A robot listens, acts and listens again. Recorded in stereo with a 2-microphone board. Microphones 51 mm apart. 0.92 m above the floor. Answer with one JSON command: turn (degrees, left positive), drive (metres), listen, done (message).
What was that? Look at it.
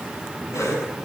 {"turn": 90}
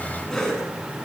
{"turn": 10}
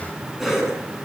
{"done": "Facing the cough, over 4 m away."}